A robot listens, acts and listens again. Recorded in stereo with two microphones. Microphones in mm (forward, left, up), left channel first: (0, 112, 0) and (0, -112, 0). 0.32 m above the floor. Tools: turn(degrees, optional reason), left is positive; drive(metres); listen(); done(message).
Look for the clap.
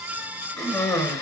listen()
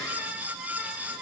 listen()
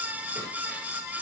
done("I can't make out a clap, only a cough.")